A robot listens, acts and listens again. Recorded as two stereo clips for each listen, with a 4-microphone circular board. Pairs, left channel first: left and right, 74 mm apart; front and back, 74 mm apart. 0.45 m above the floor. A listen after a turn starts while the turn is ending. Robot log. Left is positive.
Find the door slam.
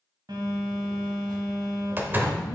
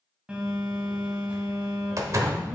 note: The door slam: 150° right.
cmd yaw -150
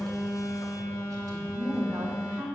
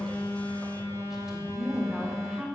end: I heard a door slam from this way, but can't make it out now.